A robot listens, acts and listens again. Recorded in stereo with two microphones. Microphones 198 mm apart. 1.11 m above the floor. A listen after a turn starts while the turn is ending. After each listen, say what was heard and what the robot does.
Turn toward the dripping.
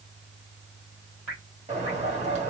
Turn 30° left.
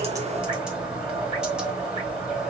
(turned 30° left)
Keep listening.
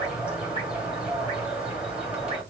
Keep listening.
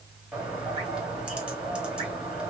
I heard dripping, but can't make it out now. It was about 30° right or 150° left.